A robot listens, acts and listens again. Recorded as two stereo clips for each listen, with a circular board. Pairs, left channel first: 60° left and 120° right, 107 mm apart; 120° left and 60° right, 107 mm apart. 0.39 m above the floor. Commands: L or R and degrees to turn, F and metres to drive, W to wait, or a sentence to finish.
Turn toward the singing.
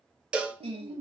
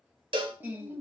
R130
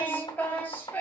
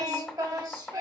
R10
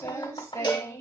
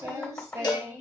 Found it: singing, straight ahead, under 1 m away.